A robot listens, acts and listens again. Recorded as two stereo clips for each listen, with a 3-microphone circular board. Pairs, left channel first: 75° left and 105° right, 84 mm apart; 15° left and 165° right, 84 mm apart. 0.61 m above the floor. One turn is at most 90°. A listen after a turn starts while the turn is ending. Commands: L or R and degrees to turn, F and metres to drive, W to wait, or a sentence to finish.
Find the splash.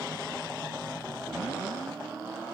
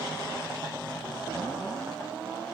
W
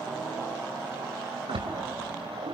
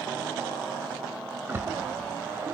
R90
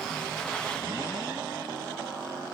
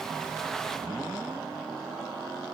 I heard a splash from this way, but can't make it out now.